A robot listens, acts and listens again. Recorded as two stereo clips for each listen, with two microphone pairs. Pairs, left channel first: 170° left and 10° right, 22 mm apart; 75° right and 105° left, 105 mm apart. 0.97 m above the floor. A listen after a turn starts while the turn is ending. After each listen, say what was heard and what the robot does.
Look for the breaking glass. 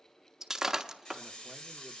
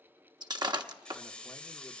The breaking glass: 60° left. Turn 60° left.
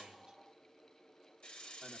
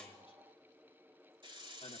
I heard breaking glass from this way, but can't make it out now.